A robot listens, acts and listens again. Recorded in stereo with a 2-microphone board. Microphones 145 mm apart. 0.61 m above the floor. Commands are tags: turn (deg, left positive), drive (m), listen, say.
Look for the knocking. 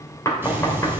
<turn deg="20"/>
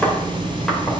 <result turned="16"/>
<say>Facing the knocking.</say>